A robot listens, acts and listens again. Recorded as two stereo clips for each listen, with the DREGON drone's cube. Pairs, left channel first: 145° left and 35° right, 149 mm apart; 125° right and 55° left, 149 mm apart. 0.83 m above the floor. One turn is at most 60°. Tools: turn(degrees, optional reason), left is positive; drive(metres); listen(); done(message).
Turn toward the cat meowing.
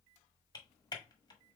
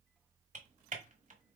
listen()
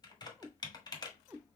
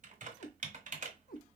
turn(degrees=-60, reason="The cat meowing: 110° right.")
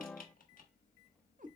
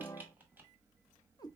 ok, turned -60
turn(degrees=-60, reason="The cat meowing is now 60° right.")
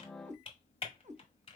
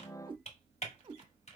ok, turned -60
done("Found it: a cat meowing, straight ahead, under 1 m away.")